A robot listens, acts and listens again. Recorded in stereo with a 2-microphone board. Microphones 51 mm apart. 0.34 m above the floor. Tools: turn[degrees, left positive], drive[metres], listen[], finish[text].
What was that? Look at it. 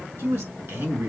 Thought: The man speaking: about 60° right or 120° right.
Action: turn[-60]
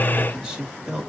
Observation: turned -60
Thought: So it is at 15° right.
Action: turn[-15]
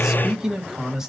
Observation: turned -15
Thought: The man speaking is now 10° right.
Action: turn[-10]
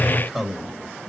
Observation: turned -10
Action: finish[Found it: a man speaking, straight ahead.]